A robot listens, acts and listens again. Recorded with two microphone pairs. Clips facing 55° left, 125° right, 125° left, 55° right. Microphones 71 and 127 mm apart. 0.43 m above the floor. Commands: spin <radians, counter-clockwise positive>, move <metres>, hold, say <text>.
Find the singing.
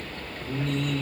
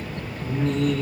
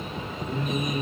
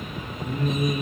spin -1.57
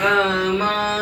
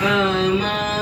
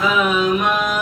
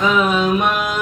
say Found it: singing, straight ahead.